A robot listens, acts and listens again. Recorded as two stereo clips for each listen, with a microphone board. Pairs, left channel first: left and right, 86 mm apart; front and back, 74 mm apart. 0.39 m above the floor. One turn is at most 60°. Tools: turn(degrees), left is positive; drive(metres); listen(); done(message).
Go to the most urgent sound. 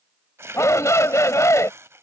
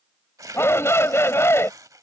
turn(degrees=45)
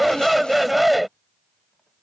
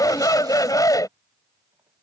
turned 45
drive(metres=1.0)
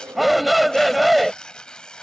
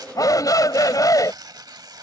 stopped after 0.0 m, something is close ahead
done("Something is in my way. I am facing the shout but have not reached it.")